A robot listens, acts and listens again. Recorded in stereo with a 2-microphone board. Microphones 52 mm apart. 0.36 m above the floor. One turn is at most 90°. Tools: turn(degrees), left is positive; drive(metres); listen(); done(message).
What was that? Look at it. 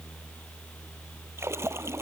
turn(degrees=-55)
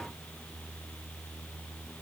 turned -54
listen()
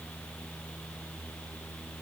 done("I heard a splash, but can't make it out now. It was about straight ahead or 70° right.")